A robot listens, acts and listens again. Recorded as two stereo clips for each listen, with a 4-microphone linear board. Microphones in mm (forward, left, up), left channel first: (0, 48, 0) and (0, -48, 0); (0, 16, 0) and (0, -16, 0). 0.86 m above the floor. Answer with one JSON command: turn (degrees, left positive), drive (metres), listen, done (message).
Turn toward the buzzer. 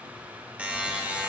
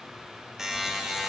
{"turn": -30}
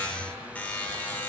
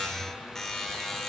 {"turn": 20}
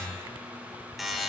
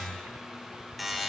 {"done": "Facing the buzzer, under 1 m away."}